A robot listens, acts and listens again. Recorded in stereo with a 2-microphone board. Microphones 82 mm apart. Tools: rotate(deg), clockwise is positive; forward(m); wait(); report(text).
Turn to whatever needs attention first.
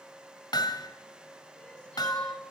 rotate(-30)
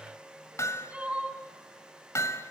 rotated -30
rotate(15)
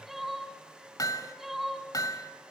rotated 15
report("Found it: crying, straight ahead, 2 to 4 m away.")